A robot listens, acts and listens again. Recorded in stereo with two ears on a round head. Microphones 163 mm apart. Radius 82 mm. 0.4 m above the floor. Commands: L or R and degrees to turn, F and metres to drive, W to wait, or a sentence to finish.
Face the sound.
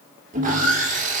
R40
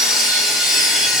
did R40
Facing the sawing, 1 to 2 m away.